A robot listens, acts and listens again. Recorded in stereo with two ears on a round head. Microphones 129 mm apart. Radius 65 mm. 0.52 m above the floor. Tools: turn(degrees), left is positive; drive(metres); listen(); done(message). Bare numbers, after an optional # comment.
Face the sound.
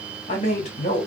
# The man speaking: about 50° left or 130° left.
turn(50)
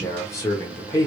# So it is at 30° left.
turn(30)
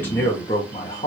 # The man speaking is now 30° left.
turn(30)
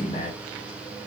# The man speaking is now 25° left.
turn(25)
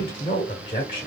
# The man speaking is now 30° left.
turn(30)
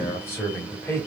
# The man speaking is now 15° left.
turn(15)
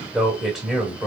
done("Found it: a man speaking, straight ahead, 1 to 2 m away.")